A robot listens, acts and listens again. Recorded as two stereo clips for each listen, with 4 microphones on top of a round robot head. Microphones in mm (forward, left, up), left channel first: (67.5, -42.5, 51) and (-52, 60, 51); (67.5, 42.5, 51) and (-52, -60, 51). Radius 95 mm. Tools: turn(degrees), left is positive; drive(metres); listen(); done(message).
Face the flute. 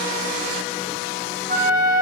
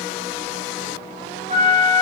turn(degrees=175)
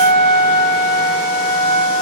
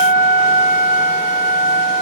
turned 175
done("Found it: a flute, straight ahead, 2 to 4 m away.")